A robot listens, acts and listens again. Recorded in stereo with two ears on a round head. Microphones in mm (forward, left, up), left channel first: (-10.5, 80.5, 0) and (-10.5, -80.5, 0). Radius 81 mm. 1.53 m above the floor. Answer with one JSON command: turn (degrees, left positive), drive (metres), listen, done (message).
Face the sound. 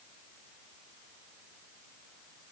{"listen": true}
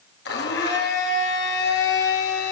{"turn": 60}
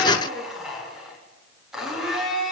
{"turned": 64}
{"done": "Found it: a blender, straight ahead, over 4 m away."}